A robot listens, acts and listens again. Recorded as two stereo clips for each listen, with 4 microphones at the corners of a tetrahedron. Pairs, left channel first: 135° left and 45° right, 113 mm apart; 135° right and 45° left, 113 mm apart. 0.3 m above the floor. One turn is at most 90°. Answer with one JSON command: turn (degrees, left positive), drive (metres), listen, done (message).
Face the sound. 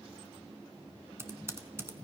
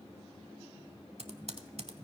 {"turn": 20}
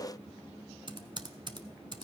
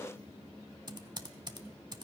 {"done": "Found it: typing on a keyboard, straight ahead."}